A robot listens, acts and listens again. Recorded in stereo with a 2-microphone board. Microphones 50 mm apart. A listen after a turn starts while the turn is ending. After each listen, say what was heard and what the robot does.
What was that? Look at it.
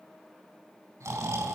Turn 90° right.
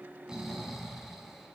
Found it: snoring, straight ahead.